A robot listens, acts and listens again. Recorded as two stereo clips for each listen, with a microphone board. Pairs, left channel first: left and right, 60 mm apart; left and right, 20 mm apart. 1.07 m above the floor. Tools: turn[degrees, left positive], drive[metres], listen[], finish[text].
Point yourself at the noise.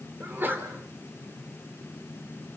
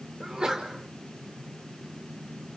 Thought: The sneeze: about 35° right or 145° right.
Action: turn[-35]
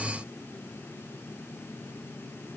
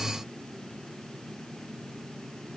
Action: listen[]
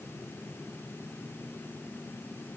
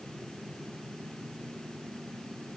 Action: finish[I heard a sneeze, but can't make it out now. It was about straight ahead or 110° right.]